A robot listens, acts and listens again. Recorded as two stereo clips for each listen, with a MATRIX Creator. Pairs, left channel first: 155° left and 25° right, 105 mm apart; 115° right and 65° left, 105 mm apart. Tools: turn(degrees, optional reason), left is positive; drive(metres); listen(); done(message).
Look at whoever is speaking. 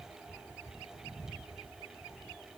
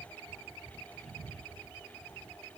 listen()
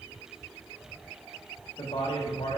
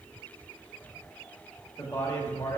turn(degrees=-175, reason="The man speaking: 175° right.")
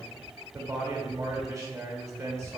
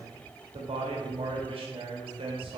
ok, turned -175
turn(degrees=40, reason="The man speaking is now 40° left.")
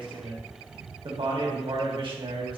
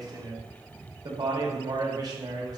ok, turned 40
turn(degrees=15, reason="The man speaking is now 15° left.")
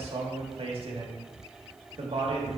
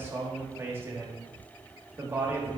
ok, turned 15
done("Facing the man speaking.")